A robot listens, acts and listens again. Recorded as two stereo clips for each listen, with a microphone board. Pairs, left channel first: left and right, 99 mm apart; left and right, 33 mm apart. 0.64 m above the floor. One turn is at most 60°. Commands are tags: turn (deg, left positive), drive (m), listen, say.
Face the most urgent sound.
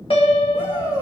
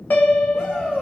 <turn deg="45"/>
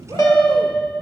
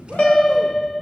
<listen/>
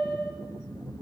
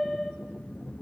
<listen/>
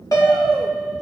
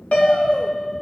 <say>I heard a shout, but can't make it out now. It was about straight ahead or 90° left.</say>